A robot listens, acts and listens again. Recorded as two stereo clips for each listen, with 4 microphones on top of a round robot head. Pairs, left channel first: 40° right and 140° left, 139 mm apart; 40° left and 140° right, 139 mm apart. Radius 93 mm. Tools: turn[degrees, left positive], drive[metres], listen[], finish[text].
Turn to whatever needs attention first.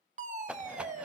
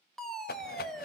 Thought: The fire alarm: 130° left.
Action: turn[130]
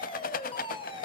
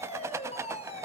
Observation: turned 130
Action: finish[Facing the fire alarm, 2 to 4 m away.]